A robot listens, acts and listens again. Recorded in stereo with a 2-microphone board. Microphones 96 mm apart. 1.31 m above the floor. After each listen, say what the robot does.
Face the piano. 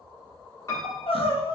Turn 35° left.
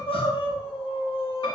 Keep listening.
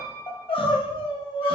Turn 100° left.
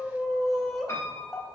Turn 35° left.
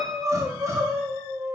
Facing the piano.